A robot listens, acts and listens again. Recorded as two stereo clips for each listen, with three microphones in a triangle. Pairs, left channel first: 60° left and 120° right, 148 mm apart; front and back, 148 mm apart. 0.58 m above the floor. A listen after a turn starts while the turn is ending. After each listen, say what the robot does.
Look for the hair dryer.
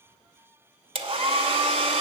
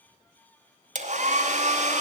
Turn 160° right.
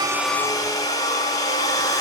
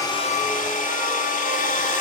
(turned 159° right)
Facing the hair dryer.